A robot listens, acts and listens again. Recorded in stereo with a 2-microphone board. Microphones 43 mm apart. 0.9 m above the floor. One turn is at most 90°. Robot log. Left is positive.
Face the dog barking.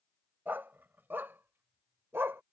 note: The dog barking: about 70° right or 110° right.
cmd yaw -70
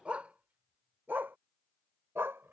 note: So it is at 75° right.
cmd yaw -75
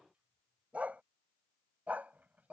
note: The dog barking is now 40° right.
cmd yaw -40
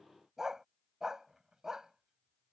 note: The dog barking is now 15° right.
cmd yaw -15
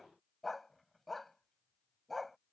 end: Facing the dog barking.